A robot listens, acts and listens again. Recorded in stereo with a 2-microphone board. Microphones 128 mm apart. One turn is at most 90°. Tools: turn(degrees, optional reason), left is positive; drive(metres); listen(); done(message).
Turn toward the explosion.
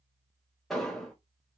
turn(degrees=30)
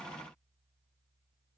listen()
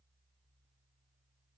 done("I heard an explosion, but can't make it out now. It was about 25° right or 145° left.")